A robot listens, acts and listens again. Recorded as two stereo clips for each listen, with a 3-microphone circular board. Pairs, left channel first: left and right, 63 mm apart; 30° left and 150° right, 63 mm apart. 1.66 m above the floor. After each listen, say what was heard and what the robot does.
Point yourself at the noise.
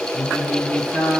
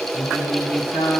The singing: 25° left. Turn 25° left.
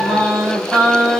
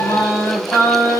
Found it: singing, straight ahead, 2 to 4 m away.